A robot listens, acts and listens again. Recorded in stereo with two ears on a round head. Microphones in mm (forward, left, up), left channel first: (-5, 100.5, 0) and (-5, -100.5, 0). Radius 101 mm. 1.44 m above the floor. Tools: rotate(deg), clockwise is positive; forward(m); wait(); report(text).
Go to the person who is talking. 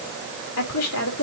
rotate(-90)
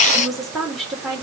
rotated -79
forward(1.0)
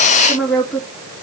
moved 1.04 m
forward(1.0)
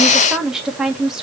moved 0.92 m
forward(1.0)
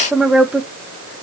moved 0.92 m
forward(1.0)
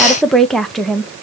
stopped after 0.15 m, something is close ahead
report("I am next to the woman speaking.")